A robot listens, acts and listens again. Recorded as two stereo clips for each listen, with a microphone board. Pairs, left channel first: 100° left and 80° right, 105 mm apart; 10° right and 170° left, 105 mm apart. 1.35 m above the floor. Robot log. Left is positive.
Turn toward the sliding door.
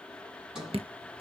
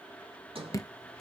note: The sliding door: 160° right.
cmd yaw -160
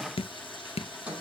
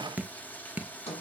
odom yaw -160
end: Found it: a sliding door, straight ahead, over 4 m away.